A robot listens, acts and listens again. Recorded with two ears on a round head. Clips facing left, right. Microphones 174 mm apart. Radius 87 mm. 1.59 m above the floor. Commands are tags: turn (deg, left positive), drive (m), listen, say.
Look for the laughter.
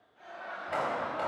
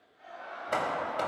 <turn deg="90"/>
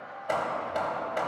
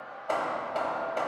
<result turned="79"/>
<turn deg="30"/>
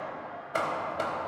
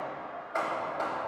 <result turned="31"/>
<listen/>
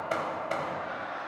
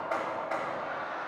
<turn deg="35"/>
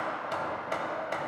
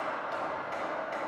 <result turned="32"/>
<listen/>
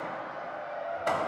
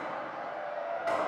<say>Found it: laughter, straight ahead.</say>